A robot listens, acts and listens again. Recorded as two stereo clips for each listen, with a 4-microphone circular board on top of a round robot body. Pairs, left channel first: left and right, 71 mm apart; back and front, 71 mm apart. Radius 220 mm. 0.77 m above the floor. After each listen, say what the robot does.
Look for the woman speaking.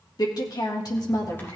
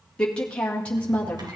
Turn 110° left.
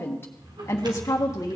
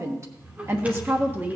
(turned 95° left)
Turn 60° left.
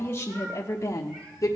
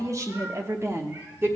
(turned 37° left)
Turn 55° left.
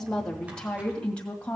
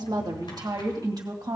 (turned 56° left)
Turn 20° left.
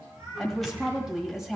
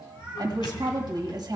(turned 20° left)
Found it: a woman speaking, straight ahead, 1 to 2 m away.